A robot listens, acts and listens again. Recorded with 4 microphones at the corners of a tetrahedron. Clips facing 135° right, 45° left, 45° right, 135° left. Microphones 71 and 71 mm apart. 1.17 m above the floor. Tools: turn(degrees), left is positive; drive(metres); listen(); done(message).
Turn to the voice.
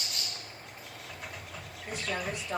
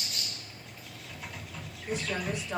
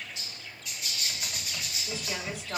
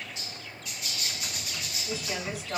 turn(degrees=-140)
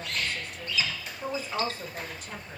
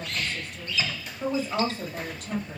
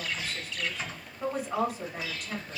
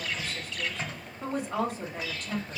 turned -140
turn(degrees=40)
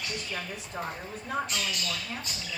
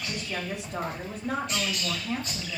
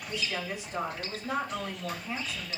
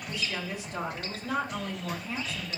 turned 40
turn(degrees=25)
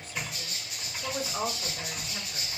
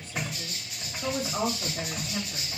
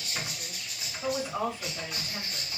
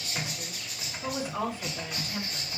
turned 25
turn(degrees=25)
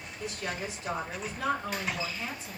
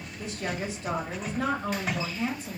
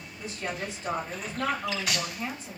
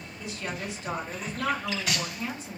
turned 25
turn(degrees=10)
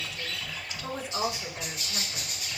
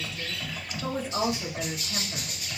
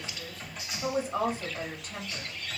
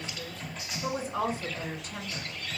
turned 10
done("Found it: a woman speaking, straight ahead, 2 to 4 m away.")